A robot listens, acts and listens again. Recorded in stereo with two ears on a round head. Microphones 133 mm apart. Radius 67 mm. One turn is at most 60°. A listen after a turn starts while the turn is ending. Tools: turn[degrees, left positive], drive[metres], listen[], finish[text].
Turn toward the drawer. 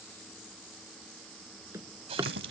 Thought: The drawer: about 20° right or 160° right.
Action: turn[-20]
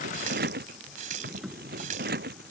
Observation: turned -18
Action: finish[Facing the drawer.]